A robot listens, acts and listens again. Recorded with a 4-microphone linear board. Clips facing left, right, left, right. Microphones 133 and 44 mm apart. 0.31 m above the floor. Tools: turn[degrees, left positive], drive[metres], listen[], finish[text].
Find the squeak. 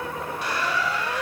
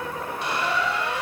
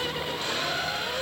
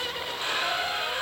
Thought: The squeak: about 25° right or 155° right.
Action: turn[-25]
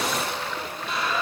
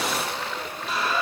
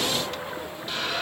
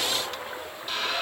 Action: finish[Facing the squeak, under 1 m away.]